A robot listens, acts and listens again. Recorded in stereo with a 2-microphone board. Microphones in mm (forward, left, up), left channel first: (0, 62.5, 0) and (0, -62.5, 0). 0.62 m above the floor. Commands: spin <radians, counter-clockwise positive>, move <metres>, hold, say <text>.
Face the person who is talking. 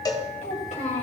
spin 1.31
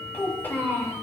spin 0.35
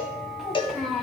say Found it: a child speaking, straight ahead, 2 to 4 m away.